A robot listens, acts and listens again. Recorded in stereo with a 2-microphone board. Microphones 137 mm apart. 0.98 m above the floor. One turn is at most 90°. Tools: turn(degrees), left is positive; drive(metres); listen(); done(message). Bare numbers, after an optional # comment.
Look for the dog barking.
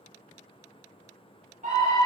listen()
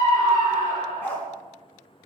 turn(30)
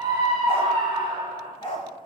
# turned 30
# So it is at 140° left.
turn(90)
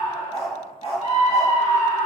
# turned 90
# The dog barking is now 50° left.
turn(50)
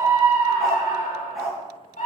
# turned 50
done("Found it: a dog barking, straight ahead, over 4 m away.")